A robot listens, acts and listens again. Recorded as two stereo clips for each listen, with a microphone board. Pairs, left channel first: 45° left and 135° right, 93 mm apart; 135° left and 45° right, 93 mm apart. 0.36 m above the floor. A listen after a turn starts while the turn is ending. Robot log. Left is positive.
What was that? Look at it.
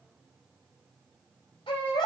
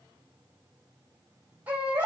note: The baby crying: 30° left.
cmd yaw +30
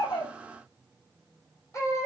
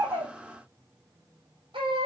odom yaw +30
note: The baby crying is now 15° right.
cmd yaw -15
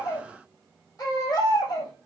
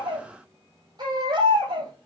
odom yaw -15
end: Found it: a baby crying, straight ahead.